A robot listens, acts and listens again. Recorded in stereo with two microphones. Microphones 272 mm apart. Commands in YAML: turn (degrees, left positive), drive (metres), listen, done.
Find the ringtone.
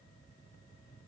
listen: true
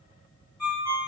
turn: 90
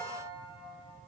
listen: true
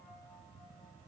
listen: true
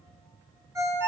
turn: -10
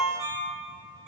done: "Facing the ringtone."